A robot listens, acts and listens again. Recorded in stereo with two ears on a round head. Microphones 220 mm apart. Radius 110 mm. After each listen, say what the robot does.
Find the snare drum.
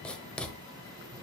Keep listening.
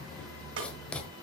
Turn 50° right.
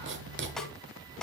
Facing the snare drum.